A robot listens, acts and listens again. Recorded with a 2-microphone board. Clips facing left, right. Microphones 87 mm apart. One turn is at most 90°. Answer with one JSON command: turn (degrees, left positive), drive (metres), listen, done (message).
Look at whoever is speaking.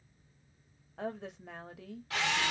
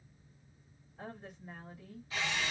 {"turn": 90}
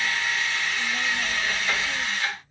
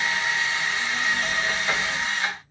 {"listen": true}
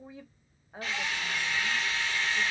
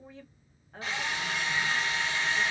{"turn": 15}
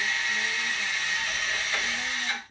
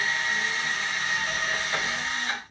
{"done": "Found it: a woman speaking, straight ahead, 1 to 2 m away."}